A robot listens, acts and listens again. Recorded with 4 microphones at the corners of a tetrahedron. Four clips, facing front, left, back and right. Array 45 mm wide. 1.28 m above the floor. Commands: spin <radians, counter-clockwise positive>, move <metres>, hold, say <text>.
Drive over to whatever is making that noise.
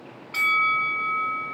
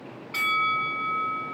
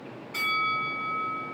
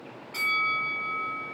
spin 0.70
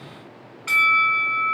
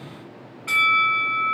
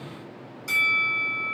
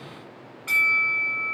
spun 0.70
spin 0.17
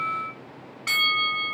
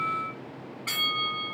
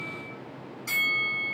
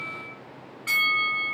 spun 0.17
move 1.0
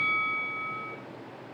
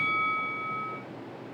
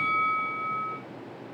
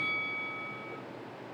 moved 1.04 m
move 1.0
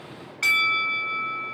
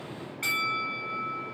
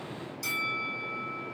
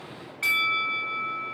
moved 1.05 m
spin -0.17
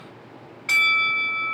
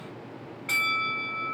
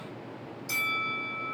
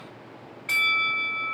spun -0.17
move 1.0
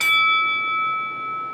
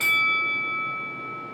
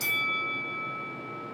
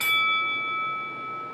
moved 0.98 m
move 1.0
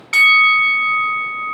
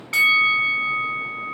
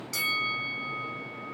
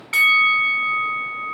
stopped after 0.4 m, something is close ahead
spin -0.17
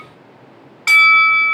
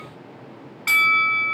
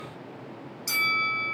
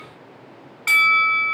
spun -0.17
say I am next to the bell.